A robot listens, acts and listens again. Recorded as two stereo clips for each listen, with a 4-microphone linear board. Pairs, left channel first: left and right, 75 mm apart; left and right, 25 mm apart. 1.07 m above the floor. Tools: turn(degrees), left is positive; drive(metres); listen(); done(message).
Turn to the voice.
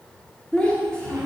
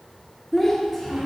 turn(degrees=30)
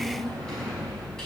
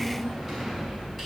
listen()
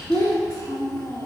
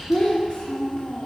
turn(degrees=135)
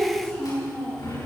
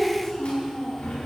turn(degrees=25)
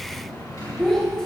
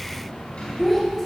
done("Facing the child speaking.")